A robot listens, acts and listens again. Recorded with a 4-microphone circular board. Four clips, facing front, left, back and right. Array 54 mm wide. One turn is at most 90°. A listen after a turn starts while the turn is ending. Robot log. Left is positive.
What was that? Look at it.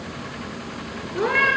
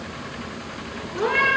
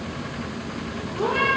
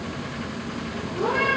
note: The cat meowing: 30° left.
cmd yaw +30
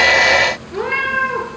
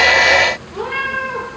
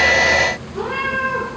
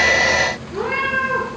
note: The cat meowing is now 10° right.
cmd yaw -10
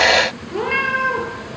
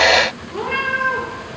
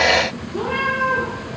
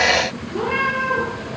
end: Found it: a cat meowing, straight ahead.